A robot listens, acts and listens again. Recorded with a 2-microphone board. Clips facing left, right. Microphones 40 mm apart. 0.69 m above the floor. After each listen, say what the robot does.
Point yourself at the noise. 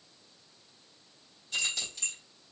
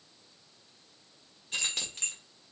Turn 55° right.
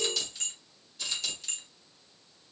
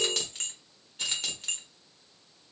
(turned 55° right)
Turn 45° right.
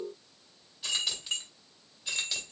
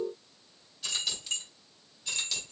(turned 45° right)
Turn 15° left.
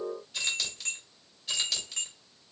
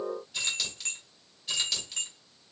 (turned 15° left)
Facing the keys jangling.